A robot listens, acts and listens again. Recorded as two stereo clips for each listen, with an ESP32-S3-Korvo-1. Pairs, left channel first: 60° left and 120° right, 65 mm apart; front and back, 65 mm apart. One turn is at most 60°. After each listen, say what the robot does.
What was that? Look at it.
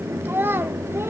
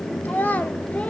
Turn 60° right.
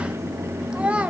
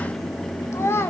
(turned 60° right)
Turn 50° right.
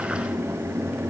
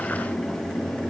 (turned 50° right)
Keep listening.
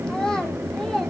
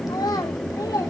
Turn 20° right.
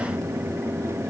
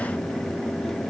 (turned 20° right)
Keep listening.
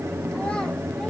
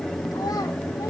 Keep listening.
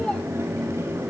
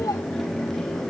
Facing where the child speaking came from. I can't hear it now.